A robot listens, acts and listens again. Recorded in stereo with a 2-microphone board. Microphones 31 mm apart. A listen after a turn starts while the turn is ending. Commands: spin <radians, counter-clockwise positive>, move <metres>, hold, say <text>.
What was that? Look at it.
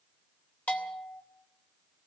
spin 0.79
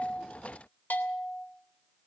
spin 1.57
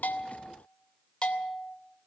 spin 0.52
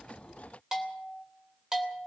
spin -0.26
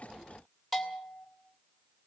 say Facing the bell, 2 to 4 m away.